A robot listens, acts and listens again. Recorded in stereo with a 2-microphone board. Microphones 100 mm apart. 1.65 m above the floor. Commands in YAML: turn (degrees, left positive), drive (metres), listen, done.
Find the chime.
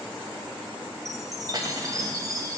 turn: -35
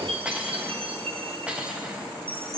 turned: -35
turn: -110
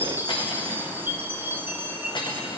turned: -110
turn: -20
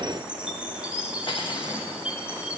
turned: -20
turn: -10
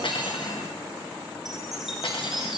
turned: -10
done: "Facing the chime, 1 to 2 m away."